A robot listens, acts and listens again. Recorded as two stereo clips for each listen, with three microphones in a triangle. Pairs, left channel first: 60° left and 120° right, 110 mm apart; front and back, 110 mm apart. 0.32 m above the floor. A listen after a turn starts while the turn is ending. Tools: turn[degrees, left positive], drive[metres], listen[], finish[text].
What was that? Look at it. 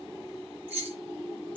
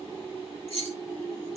Thought: The keys jangling: 165° left.
Action: turn[165]
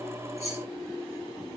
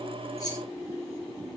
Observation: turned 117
Thought: Nothing new. It was at 50° left.
Action: turn[50]
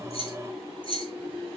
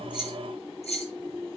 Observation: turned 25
Thought: The keys jangling is now 20° left.
Action: turn[20]
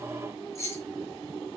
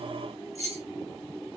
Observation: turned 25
Action: finish[Facing the keys jangling.]